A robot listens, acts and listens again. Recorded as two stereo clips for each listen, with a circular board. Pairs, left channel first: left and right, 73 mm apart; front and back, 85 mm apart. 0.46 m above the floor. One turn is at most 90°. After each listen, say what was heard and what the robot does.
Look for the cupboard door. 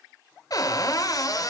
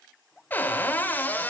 The cupboard door: 65° left. Turn 65° left.
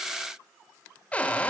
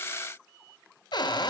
The cupboard door is now 20° left. Turn 20° left.
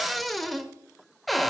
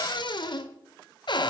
Found it: a cupboard door, straight ahead.